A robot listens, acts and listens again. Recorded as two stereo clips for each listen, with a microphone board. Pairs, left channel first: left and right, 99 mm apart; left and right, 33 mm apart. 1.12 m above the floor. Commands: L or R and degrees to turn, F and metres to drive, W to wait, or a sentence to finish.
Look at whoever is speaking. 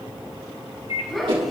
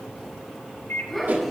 L30
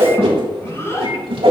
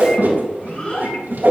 L150
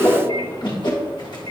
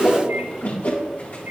W
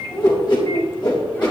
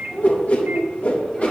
L20
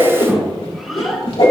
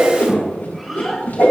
Found it: a child speaking, straight ahead.